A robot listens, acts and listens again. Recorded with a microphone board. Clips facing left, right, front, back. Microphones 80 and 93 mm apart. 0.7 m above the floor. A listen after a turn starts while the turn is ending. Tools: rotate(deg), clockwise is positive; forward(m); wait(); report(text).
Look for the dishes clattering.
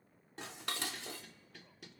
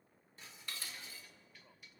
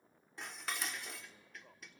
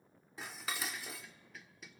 rotate(-90)
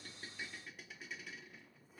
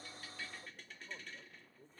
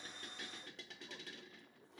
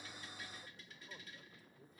rotate(-10)
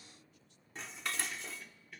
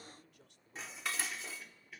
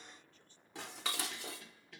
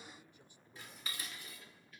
report("Found it: dishes clattering, straight ahead, 1 to 2 m away.")